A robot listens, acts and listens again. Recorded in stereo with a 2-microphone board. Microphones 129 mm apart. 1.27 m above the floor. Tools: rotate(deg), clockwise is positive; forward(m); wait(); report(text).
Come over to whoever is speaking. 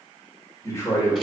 rotate(-25)
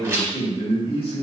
rotate(-130)
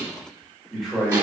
forward(1.0)
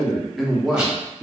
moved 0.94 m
forward(1.0)
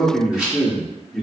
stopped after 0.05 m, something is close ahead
report("I am next to the man speaking.")